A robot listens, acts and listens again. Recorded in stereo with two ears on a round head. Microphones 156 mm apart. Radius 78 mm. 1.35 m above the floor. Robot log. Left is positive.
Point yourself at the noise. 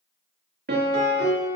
note: The piano: about 60° right or 120° right.
cmd yaw -60
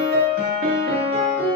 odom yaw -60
note: So it is at 60° right.
cmd yaw -60
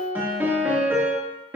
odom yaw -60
note: The piano is now 10° right.
cmd yaw -10
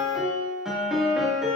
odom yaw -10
end: Facing the piano.